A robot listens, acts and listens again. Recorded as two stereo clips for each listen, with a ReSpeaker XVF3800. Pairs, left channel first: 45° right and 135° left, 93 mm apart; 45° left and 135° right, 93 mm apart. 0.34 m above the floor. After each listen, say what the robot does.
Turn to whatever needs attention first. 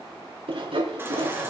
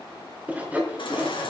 Turn 70° left.
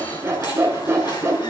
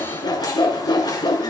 Keep listening.
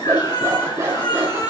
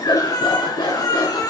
Facing the baby crying, 2 to 4 m away.